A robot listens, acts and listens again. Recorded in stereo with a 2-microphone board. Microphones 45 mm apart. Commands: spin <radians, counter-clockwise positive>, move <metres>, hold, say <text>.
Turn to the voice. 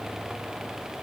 hold
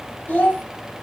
spin 0.70
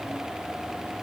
hold
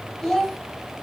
spin 0.17
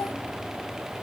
hold
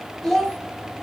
say Facing the child speaking.